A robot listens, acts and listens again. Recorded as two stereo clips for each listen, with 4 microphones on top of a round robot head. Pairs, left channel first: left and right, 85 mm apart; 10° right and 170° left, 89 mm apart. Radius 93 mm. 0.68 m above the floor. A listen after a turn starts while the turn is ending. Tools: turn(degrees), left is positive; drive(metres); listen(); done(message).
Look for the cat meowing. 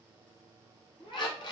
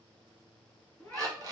turn(degrees=60)
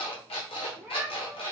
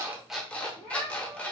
turn(degrees=-15)
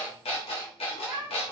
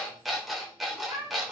turn(degrees=-30)
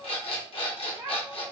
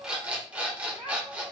turn(degrees=-40)
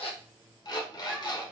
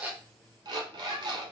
listen()
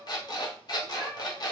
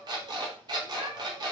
turn(degrees=-15)
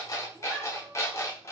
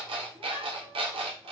done("Facing the cat meowing.")